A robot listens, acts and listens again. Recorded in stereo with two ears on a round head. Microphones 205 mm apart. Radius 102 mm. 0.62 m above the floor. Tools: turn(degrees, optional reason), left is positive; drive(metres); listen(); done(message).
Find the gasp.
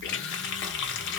listen()
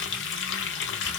listen()
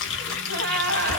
turn(degrees=-45, reason="The gasp: about 45° right or 135° right.")
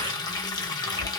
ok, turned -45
listen()
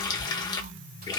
done("I heard a gasp, but can't make it out now. It was about straight ahead or 90° right.")